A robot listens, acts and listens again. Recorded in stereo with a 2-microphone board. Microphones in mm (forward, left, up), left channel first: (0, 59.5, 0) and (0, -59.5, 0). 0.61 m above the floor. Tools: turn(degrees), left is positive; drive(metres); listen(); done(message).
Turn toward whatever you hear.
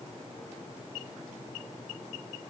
listen()
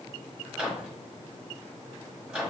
turn(degrees=-30)
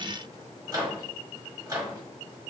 turn(degrees=-140)
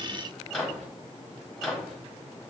turn(degrees=10)
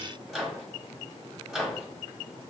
done("Found it: a microwave, straight ahead, 1 to 2 m away.")